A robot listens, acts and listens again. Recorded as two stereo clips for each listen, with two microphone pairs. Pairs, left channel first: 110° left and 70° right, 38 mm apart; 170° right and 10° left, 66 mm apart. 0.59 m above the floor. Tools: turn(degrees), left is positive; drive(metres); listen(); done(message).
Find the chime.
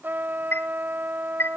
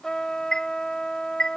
turn(degrees=110)
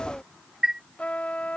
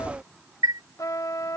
done("Facing the chime.")